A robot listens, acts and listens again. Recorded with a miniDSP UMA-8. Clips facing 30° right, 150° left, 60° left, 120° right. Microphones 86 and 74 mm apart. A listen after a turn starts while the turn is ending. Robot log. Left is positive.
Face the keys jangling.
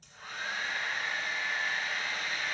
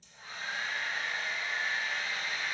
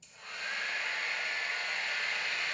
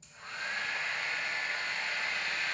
cmd idle
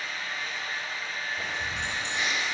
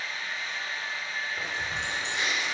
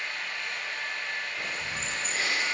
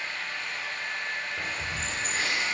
note: The keys jangling: 160° right.
cmd yaw -160
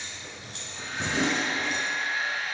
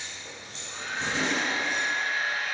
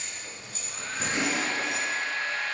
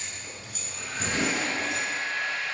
end: Found it: keys jangling, straight ahead, 2 to 4 m away.